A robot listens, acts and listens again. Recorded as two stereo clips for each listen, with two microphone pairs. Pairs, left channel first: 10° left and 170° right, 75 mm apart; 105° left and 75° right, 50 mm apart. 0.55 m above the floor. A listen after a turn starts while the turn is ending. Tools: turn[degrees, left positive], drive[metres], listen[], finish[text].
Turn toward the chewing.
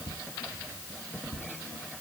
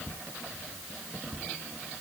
Action: listen[]
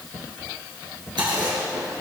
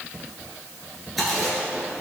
Thought: The chewing: 170° right.
Action: turn[-170]
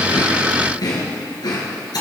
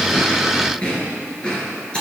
Thought: The chewing is now 35° left.
Action: turn[35]
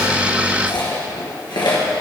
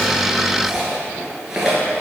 Action: finish[Facing the chewing.]